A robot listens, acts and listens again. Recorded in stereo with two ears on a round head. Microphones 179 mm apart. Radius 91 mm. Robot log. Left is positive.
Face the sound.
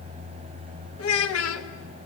cmd yaw +90
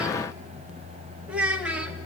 end: Facing the child speaking, 1 to 2 m away.